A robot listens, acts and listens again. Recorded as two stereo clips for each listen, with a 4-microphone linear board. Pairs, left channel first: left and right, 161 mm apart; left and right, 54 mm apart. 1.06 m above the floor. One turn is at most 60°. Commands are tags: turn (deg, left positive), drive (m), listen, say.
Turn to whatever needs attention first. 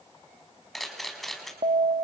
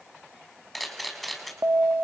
<turn deg="-40"/>
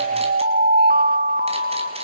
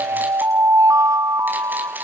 <turn deg="-60"/>
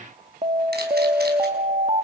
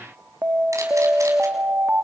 <turn deg="-40"/>
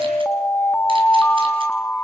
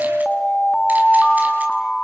<turn deg="10"/>
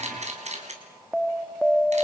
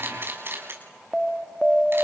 <say>Found it: an alarm, straight ahead, 1 to 2 m away.</say>